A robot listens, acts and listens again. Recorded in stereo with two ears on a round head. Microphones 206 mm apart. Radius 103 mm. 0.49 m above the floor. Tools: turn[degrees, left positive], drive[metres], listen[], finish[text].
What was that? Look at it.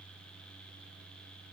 Action: listen[]
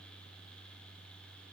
Action: listen[]
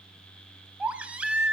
Action: turn[-30]
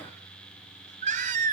Thought: So it is at 145° right.
Action: turn[-145]
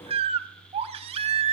Thought: The baby crying is now 30° right.
Action: turn[-30]
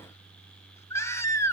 Thought: The baby crying is now 10° left.
Action: turn[10]
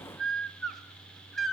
Action: finish[Found it: a baby crying, straight ahead.]